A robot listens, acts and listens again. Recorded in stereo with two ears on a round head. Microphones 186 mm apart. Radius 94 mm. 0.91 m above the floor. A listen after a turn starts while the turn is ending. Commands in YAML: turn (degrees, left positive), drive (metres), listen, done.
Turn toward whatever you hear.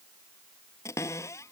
turn: 30
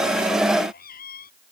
turn: 130
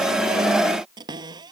turn: -20
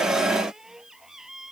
done: "Facing the cupboard door."